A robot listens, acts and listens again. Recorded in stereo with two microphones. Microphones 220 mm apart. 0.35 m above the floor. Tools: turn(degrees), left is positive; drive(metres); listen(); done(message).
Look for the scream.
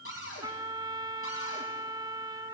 listen()
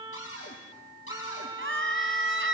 turn(degrees=-65)
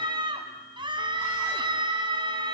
turn(degrees=-25)
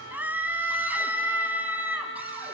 turn(degrees=-10)
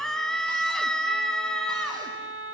done("Facing the scream, 2 to 4 m away.")